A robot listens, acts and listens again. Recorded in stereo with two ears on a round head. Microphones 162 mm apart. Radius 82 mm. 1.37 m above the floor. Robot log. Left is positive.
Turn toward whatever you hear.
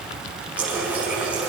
cmd yaw -30
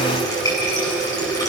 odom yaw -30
note: So it is at 20° left.
cmd yaw +20
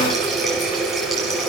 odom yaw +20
end: Facing the running tap, over 4 m away.